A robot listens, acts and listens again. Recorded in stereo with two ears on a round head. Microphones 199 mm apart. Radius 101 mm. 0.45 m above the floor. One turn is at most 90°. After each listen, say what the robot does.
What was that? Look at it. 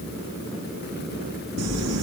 Turn 90° right.
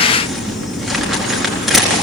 Found it: crumpling, straight ahead.